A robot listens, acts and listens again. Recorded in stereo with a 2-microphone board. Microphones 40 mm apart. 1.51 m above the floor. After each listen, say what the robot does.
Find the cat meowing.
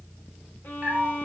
Turn 40° right.
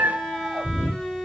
Turn 105° right.
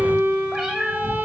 Turn 25° right.
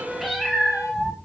Turn 10° right.
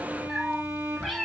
Facing the cat meowing.